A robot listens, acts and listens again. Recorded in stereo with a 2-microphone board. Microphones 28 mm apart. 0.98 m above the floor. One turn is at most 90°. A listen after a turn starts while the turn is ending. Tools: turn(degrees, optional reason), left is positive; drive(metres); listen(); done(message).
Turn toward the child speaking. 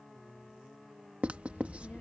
turn(degrees=65, reason="The child speaking: about 65° left or 115° left.")
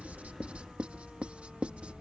turn(degrees=50, reason="So it is at 50° left.")
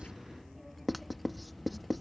done("Facing the child speaking.")